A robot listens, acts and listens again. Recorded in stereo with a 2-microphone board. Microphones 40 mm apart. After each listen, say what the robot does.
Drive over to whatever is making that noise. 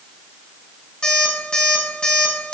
Turn 20° left.
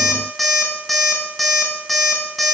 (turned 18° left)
Drive 1.0 m forward.
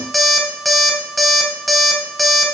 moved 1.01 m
Drive 1.0 m forward.
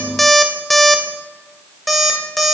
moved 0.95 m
Drive 1.0 m forward.
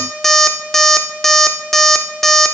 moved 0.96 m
Drive 1.0 m forward.
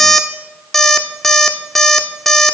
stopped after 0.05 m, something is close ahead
I am next to the alarm clock.